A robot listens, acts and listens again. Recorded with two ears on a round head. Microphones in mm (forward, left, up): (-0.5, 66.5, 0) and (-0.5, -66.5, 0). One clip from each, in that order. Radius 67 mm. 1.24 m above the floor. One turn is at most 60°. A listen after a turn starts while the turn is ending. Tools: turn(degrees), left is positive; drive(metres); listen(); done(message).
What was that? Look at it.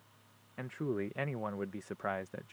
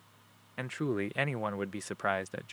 turn(degrees=-60)
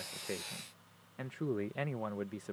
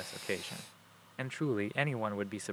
turn(degrees=-50)
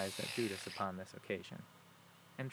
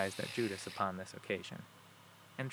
turn(degrees=-20)
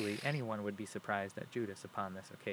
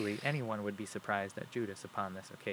done("Facing the man speaking.")